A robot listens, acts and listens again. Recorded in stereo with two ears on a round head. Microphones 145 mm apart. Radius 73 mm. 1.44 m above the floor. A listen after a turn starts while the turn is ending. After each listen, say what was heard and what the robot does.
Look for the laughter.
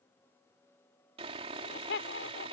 Turn 90° left.
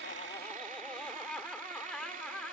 Facing the laughter.